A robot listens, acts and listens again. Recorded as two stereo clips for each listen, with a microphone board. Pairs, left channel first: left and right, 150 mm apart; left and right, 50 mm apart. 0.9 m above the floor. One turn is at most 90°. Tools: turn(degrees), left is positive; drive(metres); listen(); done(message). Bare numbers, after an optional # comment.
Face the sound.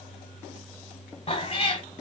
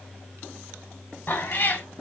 # The cat meowing: about 40° left or 140° left.
turn(40)
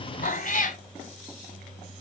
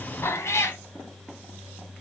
# So it is at 95° left.
turn(90)
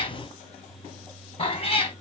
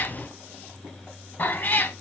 # The cat meowing is now 45° left.
turn(45)
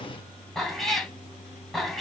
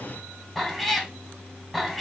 done("Found it: a cat meowing, straight ahead, 1 to 2 m away.")